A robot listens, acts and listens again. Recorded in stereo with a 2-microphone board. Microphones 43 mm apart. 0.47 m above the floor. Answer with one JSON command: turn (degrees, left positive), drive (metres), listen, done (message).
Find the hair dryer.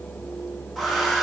{"turn": 30}
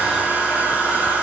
{"turn": -30}
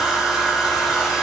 {"done": "Facing the hair dryer."}